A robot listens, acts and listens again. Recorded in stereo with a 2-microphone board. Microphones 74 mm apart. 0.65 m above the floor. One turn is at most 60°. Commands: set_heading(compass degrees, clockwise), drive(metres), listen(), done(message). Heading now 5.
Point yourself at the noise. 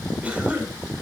set_heading(25)
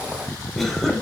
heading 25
done("Found it: a cough, straight ahead, 2 to 4 m away.")